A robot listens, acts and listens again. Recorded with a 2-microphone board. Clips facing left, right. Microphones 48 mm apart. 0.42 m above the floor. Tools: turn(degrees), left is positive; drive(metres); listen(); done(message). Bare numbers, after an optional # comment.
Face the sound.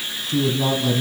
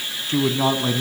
# The man speaking: about 45° right or 135° right.
turn(-45)
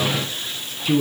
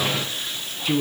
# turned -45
done("Facing the man speaking.")